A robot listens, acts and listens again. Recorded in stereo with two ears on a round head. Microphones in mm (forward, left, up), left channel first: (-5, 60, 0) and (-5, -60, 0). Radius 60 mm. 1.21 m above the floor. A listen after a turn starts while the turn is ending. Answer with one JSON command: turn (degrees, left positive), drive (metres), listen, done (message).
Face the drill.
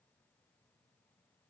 {"listen": true}
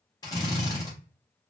{"turn": 30}
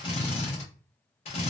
{"turn": 115}
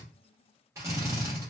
{"turn": -30}
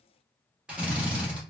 {"turn": -10}
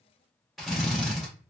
{"done": "Facing the drill."}